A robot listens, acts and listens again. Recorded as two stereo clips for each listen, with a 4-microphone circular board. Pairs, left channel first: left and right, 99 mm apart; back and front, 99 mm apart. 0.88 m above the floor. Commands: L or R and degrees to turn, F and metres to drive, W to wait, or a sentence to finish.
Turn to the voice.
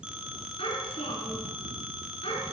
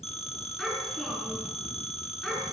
L95
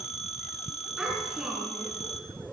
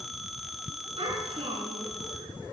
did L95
R10
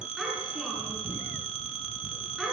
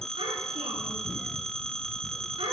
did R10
Facing the child speaking, over 4 m away.